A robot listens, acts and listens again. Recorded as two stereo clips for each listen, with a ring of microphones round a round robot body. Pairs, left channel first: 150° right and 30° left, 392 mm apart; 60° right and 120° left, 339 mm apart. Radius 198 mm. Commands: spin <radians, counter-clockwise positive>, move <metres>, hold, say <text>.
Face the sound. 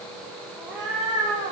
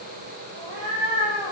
spin 2.09
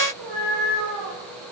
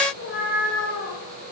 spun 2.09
say Found it: a cat meowing, straight ahead.